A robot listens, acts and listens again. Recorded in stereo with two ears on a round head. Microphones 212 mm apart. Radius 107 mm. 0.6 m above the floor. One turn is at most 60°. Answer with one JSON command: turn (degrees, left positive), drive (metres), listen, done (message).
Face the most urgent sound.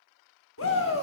{"turn": 60}
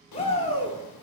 {"turn": 30}
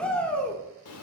{"done": "Found it: a shout, straight ahead."}